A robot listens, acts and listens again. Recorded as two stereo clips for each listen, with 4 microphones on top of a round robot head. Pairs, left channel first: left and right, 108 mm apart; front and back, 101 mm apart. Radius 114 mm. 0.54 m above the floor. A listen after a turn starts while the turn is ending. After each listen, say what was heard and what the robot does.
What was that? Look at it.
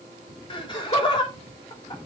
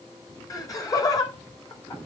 The laughter: 50° left. Turn 50° left.
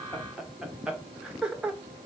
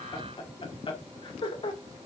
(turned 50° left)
The laughter is now 10° right. Turn 10° right.
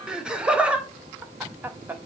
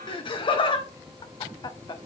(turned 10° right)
The laughter is now 25° right. Turn 25° right.
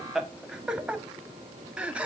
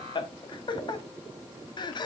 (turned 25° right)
The laughter is now 15° right. Turn 15° right.
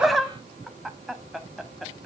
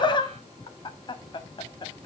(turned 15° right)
Facing the laughter.